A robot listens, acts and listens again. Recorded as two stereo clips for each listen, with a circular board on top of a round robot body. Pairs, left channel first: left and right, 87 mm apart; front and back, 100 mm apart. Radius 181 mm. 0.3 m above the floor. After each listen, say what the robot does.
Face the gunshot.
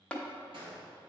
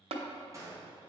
Turn 120° right.
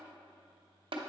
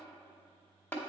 Facing where the gunshot came from. I can't hear it now.